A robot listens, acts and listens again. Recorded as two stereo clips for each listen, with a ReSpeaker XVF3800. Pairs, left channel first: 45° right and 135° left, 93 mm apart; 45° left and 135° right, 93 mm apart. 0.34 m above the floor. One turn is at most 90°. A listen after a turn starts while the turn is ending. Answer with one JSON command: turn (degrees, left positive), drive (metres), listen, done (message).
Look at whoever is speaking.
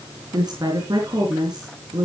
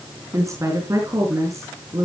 {"turn": 90}
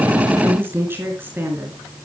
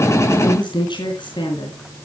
{"turn": 70}
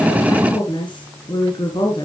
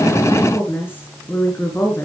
{"turn": -20}
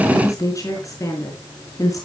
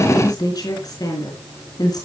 {"done": "Found it: a woman speaking, straight ahead, over 4 m away."}